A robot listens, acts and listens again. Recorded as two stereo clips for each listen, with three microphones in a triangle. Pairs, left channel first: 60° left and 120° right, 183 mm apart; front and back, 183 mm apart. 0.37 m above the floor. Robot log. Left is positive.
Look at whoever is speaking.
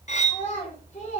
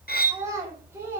note: The child speaking: 105° left.
cmd yaw +105
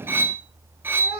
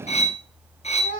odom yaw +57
note: The child speaking is now 40° left.
cmd yaw +40
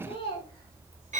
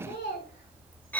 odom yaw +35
end: Found it: a child speaking, straight ahead, 2 to 4 m away.